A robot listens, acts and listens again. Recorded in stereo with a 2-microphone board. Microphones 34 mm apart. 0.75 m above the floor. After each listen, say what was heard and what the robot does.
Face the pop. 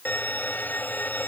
Keep listening.
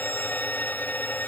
Keep listening.
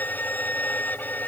I can't make out a pop, only a violin.